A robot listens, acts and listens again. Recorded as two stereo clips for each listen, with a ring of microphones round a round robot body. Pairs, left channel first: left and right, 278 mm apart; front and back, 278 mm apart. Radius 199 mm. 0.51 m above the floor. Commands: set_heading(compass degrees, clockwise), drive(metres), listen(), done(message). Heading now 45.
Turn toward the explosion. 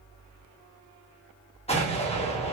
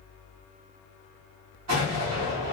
set_heading(245)
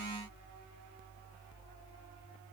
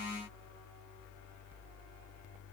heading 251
done("I heard an explosion from this way, but can't make it out now.")